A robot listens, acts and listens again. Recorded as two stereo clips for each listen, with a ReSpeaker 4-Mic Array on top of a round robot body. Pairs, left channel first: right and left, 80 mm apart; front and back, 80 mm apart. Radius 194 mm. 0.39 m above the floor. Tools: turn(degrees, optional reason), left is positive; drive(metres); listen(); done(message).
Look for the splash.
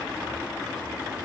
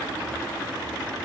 listen()
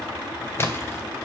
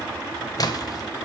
turn(degrees=-35, reason="The splash: 35° right.")
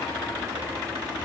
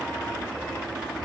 done("I heard a splash from this way, but can't make it out now.")